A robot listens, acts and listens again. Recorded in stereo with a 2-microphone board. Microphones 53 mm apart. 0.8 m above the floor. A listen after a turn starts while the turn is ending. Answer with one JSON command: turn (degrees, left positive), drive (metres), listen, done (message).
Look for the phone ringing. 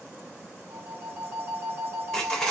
{"turn": -40}
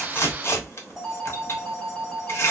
{"done": "Facing the phone ringing."}